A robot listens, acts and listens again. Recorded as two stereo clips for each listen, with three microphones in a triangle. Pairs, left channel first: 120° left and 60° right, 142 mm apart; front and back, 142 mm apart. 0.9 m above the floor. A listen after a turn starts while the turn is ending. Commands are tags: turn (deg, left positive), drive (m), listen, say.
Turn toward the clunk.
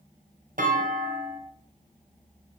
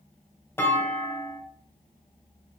<turn deg="-75"/>
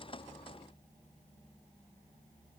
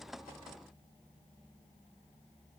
<say>I heard a clunk from this way, but can't make it out now.</say>